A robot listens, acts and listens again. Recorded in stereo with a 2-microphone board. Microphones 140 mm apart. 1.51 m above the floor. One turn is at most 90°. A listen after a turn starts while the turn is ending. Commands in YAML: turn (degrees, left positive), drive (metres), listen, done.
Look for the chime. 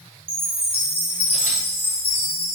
turn: 15
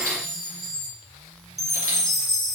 done: "Facing the chime, 2 to 4 m away."